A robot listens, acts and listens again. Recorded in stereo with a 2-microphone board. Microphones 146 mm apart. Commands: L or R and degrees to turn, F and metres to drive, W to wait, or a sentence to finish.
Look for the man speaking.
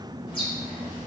W
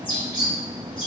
W
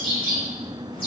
I can't make out a man speaking to turn to.